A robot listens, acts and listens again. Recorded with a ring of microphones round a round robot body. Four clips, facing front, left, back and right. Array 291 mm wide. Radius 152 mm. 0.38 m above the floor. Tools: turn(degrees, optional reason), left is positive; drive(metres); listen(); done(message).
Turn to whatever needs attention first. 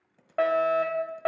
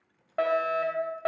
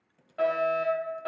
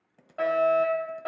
turn(degrees=25, reason="The fire alarm: 25° left.")
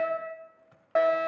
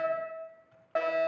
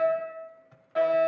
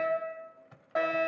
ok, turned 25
done("Facing the fire alarm.")